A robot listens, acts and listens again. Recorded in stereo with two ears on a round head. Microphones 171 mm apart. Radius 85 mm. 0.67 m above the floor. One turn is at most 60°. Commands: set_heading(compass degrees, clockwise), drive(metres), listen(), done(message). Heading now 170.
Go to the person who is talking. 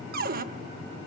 listen()
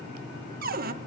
listen()
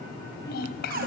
set_heading(115)
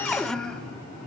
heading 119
drive(1.0)
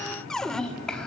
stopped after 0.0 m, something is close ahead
done("Something is in my way. I am facing the child speaking but have not reached it.")